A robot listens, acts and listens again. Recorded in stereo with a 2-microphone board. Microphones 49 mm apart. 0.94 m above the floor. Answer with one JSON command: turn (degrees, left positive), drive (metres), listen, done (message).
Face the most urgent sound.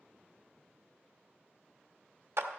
{"listen": true}
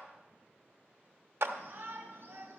{"turn": -60}
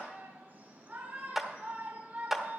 {"turn": -50}
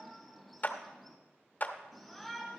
{"done": "Found it: a shout, straight ahead."}